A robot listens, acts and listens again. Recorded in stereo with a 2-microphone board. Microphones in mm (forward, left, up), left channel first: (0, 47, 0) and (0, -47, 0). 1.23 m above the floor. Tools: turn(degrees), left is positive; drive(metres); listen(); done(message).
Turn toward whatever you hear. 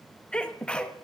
turn(degrees=30)
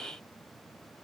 listen()
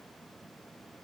done("I heard a sneeze, but can't make it out now. It was about 20° right or 140° left.")